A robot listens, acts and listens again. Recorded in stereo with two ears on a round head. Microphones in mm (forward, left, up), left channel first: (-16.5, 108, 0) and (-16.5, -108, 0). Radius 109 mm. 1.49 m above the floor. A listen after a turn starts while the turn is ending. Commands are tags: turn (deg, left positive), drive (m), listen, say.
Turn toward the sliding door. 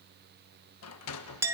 <turn deg="75"/>
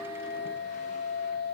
<listen/>
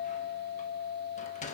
<turn deg="30"/>
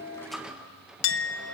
<say>Facing the sliding door, 1 to 2 m away.</say>